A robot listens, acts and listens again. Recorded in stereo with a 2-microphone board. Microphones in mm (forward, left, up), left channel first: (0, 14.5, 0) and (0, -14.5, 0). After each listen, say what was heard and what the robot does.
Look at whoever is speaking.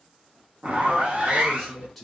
Turn 30° left.
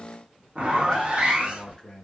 So it is at 145° left. Turn 145° left.
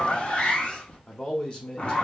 The man speaking is now 35° left. Turn 35° left.
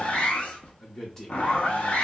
The man speaking is now 20° left. Turn 20° left.
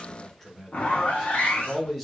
Found it: a man speaking, straight ahead, under 1 m away.